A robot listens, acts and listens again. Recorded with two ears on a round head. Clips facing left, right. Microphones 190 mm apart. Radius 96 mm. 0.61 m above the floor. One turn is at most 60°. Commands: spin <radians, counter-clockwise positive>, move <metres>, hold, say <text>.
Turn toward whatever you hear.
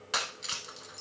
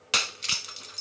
spin -0.70
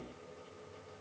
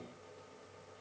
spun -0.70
hold
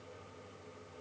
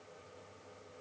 say I heard breaking glass, but can't make it out now. It was about straight ahead or 100° right.